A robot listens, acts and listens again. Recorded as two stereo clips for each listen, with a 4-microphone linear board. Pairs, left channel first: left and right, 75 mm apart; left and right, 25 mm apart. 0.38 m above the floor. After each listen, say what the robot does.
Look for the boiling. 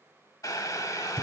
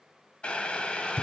Turn 50° left.
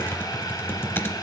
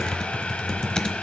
Turn 75° left.
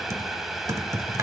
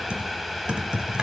Found it: boiling, straight ahead, 1 to 2 m away.